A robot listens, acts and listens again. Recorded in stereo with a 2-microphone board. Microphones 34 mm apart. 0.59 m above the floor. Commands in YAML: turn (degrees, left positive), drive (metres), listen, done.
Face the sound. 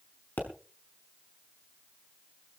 turn: 70
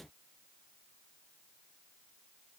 listen: true
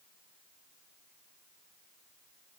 done: "I heard a pop, but can't make it out now. It was about straight ahead or 40° left."